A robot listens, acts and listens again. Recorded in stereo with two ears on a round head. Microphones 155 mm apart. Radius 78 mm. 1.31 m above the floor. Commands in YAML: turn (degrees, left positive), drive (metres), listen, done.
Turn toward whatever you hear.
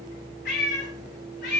turn: 65
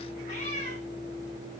turn: 40
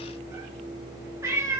turn: -15
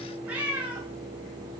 turn: -10
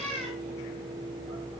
done: "Facing the cat meowing."